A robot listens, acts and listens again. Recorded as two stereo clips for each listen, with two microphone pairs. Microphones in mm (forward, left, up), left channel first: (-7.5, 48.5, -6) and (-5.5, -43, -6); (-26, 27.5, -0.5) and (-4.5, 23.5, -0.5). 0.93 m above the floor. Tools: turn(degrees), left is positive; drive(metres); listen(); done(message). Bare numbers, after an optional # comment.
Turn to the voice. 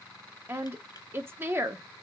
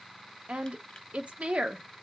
# The woman speaking: 25° right.
turn(-25)
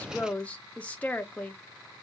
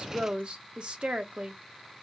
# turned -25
# The woman speaking is now 20° left.
turn(20)
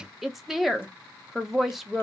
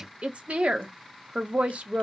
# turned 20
done("Facing the woman speaking, under 1 m away.")